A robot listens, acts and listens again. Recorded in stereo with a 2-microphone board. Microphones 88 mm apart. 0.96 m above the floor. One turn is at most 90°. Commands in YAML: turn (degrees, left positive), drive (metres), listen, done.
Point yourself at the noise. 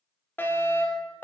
turn: 25
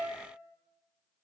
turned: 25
listen: true
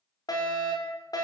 turn: 90
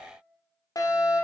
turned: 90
turn: 45
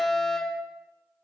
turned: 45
done: "Found it: a fire alarm, straight ahead, over 4 m away."